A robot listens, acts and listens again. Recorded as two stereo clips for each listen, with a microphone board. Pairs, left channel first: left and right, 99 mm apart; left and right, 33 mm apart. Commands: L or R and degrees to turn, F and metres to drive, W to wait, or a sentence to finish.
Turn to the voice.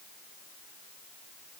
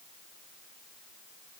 W
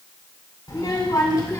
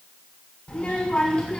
L35
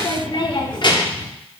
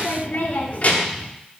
L135
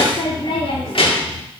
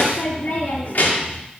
L65
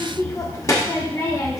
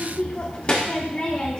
L35
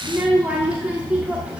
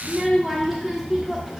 R10
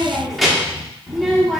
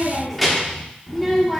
Facing the child speaking.